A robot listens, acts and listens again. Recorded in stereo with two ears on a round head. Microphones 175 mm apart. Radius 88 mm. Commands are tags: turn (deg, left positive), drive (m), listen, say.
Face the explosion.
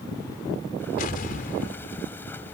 <turn deg="45"/>
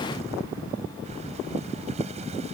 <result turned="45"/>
<listen/>
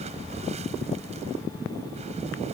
<say>I heard an explosion, but can't make it out now. It was about straight ahead or 90° left.</say>